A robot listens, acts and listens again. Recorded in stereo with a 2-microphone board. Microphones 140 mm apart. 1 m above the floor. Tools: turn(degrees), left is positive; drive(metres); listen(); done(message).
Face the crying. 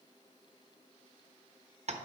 listen()
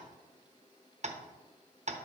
listen()
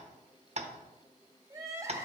turn(degrees=-20)
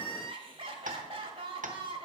turn(degrees=-135)
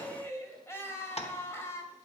turn(degrees=20)
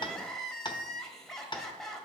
done("Found it: crying, straight ahead, 1 to 2 m away.")